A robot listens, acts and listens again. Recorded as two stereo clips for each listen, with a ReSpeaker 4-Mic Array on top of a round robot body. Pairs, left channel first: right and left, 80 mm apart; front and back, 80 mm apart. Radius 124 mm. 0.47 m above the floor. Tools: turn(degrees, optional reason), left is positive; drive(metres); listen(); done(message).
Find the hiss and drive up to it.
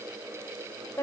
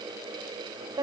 listen()
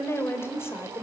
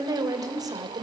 listen()
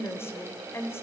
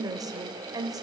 done("I can't make out a hiss to turn to.")